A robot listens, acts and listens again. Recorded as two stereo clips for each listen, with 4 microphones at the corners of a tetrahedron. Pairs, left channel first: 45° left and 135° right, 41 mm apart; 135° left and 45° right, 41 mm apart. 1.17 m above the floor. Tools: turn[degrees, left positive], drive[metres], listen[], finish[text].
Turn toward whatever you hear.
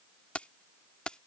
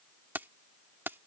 Thought: The keys jangling: 20° right.
Action: turn[-20]
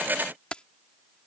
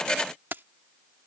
Thought: The keys jangling is now 20° right.
Action: turn[-20]
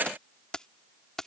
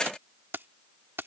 Thought: The keys jangling is now 30° right.
Action: turn[-30]
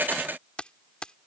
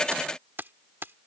Thought: The keys jangling is now 20° right.
Action: turn[-20]
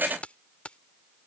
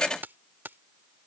Thought: The keys jangling is now 15° right.
Action: turn[-15]
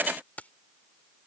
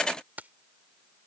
Action: finish[Facing the keys jangling.]